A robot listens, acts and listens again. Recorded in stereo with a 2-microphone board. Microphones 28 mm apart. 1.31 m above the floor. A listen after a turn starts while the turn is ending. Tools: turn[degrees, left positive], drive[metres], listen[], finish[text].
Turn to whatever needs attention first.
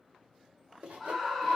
Action: turn[30]
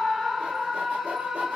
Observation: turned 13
Action: finish[Facing the scream, under 1 m away.]